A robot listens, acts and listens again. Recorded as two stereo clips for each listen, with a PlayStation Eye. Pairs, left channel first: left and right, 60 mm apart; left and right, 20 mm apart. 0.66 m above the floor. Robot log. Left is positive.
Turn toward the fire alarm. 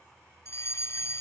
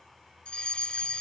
note: The fire alarm: about 50° left or 130° left.
cmd yaw +50
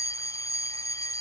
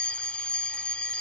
note: So it is at 75° left.
cmd yaw +75
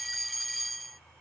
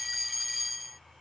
end: Facing the fire alarm.